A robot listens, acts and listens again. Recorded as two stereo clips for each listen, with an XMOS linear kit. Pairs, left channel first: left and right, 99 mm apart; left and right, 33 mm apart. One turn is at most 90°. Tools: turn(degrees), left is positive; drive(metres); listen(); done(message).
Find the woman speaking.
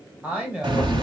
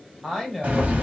turn(degrees=-30)
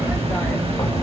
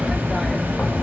listen()
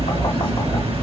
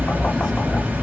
listen()
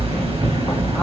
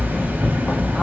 done("I heard a woman speaking, but can't make it out now. It was about 15° left or 135° right.")